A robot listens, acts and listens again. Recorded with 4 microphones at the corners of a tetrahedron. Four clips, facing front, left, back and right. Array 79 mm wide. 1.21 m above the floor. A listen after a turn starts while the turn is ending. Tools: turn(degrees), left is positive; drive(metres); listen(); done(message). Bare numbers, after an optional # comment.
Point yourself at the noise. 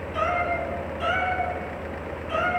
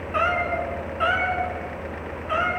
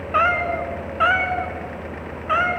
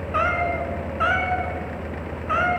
# The cat meowing: 160° right.
turn(-160)
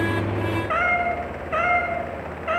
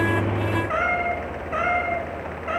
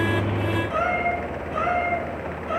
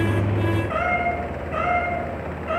# The cat meowing is now 20° left.
turn(20)
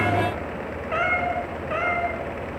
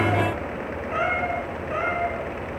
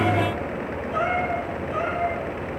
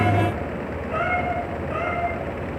listen()
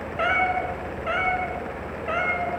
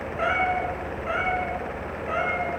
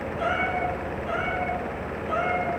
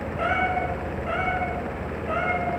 # The cat meowing is now 10° left.
turn(10)
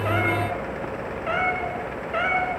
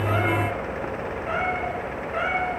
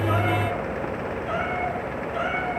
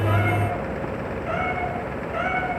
listen()
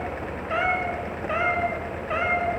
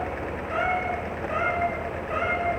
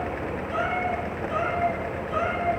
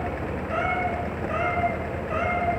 done("Found it: a cat meowing, straight ahead.")